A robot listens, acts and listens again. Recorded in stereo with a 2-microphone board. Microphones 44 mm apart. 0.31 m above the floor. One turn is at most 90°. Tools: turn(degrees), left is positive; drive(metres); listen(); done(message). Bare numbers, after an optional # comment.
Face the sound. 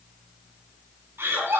# The laughter: about 60° right or 120° right.
turn(-60)
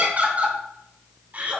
# So it is at 35° right.
turn(-35)
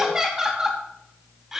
# The laughter is now 10° right.
turn(-10)
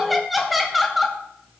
done("Found it: laughter, straight ahead, 1 to 2 m away.")